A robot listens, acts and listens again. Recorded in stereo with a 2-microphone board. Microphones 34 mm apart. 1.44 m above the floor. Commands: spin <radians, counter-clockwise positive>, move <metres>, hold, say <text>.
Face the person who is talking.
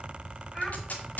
spin 0.35
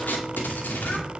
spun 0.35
hold
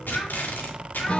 spin 2.36
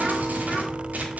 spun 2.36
hold
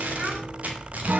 spin -0.35
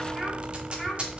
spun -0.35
say Facing the child speaking.